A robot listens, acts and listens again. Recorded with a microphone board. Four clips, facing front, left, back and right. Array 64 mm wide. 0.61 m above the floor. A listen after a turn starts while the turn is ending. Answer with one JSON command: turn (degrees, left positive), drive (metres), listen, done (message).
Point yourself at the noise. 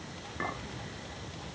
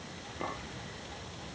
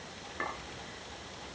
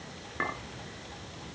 {"turn": -95}
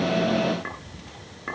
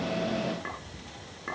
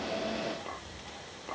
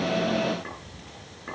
{"turn": 10}
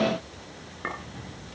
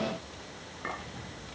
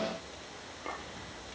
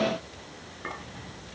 {"done": "Found it: a clink, straight ahead."}